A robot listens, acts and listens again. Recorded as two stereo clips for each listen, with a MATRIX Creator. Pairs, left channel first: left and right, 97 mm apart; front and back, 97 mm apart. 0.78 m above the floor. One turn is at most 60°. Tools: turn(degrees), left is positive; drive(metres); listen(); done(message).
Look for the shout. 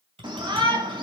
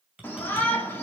turn(degrees=-60)
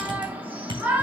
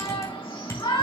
turn(degrees=-20)
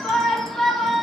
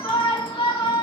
done("Found it: a shout, straight ahead.")